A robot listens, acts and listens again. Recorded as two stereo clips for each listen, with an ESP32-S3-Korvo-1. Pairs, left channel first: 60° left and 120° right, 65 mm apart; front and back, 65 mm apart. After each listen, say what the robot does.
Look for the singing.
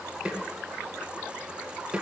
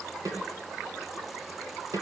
Keep listening.
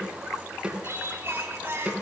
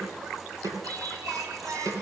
Turn 170° right.
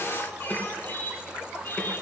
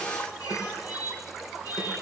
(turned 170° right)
Found it: singing, straight ahead.